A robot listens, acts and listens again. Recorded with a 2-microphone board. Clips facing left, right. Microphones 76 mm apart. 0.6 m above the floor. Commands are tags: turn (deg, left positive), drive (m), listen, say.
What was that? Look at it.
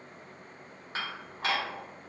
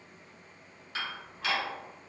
<turn deg="35"/>
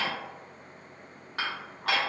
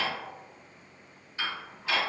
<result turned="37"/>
<turn deg="105"/>
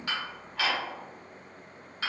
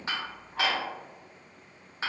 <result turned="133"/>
<turn deg="-25"/>
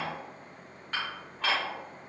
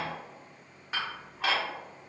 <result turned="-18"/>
<turn deg="-10"/>
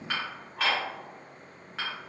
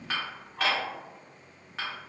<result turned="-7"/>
<say>Facing the dishes clattering, 1 to 2 m away.</say>